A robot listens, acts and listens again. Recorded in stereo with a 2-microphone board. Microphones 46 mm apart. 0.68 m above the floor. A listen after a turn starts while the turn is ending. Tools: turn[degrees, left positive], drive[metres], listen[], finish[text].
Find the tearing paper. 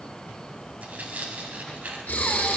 Thought: The tearing paper: about 40° right or 140° right.
Action: turn[-40]
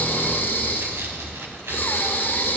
Action: listen[]
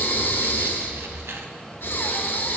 Action: listen[]
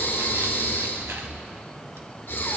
Action: finish[I heard tearing paper, but can't make it out now. It was about straight ahead or 100° right.]